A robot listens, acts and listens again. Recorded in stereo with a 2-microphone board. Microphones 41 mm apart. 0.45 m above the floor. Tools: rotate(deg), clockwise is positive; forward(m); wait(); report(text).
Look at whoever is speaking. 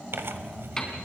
wait()
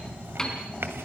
wait()
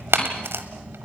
report("I can't make out anyone speaking to turn to.")